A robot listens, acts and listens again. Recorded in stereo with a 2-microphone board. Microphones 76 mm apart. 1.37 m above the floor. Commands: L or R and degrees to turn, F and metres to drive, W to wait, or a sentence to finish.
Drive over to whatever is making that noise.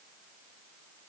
W
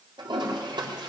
R90
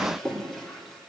F1.0
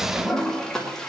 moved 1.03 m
F1.0
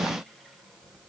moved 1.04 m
W
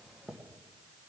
F1.0
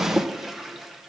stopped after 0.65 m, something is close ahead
I am next to the toilet flushing.